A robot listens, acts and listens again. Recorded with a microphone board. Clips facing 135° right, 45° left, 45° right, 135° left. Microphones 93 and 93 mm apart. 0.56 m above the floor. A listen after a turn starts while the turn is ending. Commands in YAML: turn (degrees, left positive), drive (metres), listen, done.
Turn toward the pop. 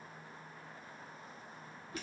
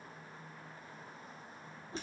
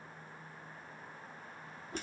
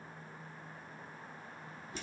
listen: true
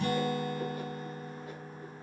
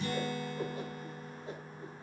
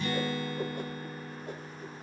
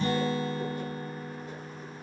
listen: true
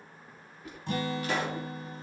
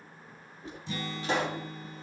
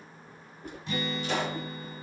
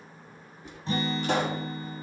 turn: 105
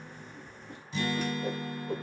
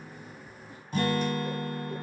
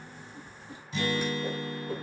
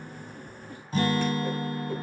done: "Facing where the pop came from. I can't hear it now."